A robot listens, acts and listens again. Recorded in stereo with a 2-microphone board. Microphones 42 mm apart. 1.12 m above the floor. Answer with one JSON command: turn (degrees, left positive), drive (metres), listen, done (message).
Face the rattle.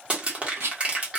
{"turn": -90}
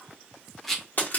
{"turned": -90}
{"done": "Found it: a rattle, straight ahead."}